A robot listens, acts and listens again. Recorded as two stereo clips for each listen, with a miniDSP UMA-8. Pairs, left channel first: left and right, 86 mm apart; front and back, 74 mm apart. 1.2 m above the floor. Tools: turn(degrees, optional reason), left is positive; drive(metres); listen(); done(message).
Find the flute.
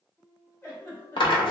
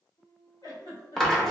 turn(degrees=-15, reason="The flute: 15° right.")
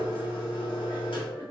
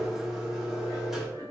listen()
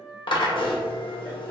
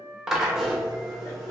done("Facing the flute, 1 to 2 m away.")